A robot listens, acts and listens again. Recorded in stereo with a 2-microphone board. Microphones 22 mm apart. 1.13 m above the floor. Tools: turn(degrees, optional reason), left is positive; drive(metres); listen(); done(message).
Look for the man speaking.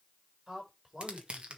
turn(degrees=-20, reason="The man speaking: about 20° right or 160° right.")
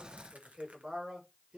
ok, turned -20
turn(degrees=-135, reason="So it is at 135° right.")
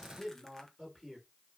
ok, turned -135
done("Facing the man speaking.")